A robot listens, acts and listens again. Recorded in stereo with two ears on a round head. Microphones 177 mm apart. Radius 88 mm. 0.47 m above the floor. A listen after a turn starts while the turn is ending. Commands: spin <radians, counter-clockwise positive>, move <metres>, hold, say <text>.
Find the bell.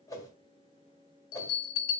spin 1.57
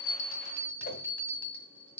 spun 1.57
spin 0.17
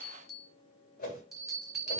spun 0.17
say Found it: a bell, straight ahead.